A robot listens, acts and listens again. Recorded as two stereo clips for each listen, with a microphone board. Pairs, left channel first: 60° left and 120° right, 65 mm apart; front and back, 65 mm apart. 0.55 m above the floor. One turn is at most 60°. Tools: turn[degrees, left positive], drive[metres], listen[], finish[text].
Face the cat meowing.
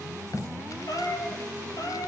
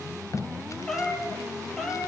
Thought: The cat meowing: 85° left.
Action: turn[60]
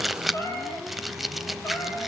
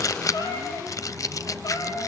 Thought: The cat meowing is now 15° left.
Action: turn[15]
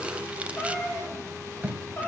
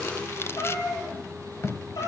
Action: finish[Facing the cat meowing, over 4 m away.]